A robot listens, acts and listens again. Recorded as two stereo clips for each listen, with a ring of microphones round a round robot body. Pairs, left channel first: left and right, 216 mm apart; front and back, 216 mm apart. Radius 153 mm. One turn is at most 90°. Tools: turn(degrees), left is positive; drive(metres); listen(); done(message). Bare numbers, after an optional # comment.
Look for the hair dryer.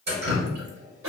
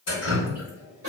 listen()
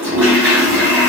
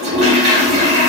listen()
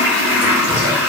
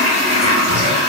done("I can't make out a hair dryer to turn to.")